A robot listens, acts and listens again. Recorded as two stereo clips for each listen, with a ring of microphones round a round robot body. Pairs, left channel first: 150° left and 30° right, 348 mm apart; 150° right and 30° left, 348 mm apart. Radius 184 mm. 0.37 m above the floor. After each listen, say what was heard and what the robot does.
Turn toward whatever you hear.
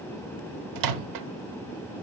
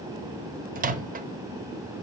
The microwave: 35° right. Turn 35° right.
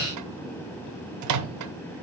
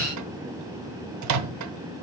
Found it: a microwave, straight ahead, 1 to 2 m away.